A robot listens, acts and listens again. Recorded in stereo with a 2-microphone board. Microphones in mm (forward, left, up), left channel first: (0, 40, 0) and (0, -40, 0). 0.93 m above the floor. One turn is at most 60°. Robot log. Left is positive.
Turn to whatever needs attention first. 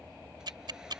cmd idle
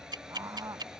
note: The scream: about 40° right or 140° right.
cmd yaw -40
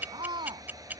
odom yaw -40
note: So it is at 100° right.
cmd yaw -60
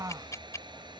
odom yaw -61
note: The scream is now 40° right.
cmd yaw -40
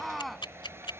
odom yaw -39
end: Found it: a scream, straight ahead.